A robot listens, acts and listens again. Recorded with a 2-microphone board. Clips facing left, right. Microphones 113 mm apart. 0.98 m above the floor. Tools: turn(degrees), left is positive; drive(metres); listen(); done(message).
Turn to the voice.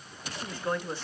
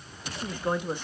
turn(degrees=-20)
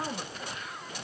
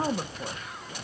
turn(degrees=-140)
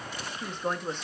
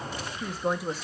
done("Facing the woman speaking, 1 to 2 m away.")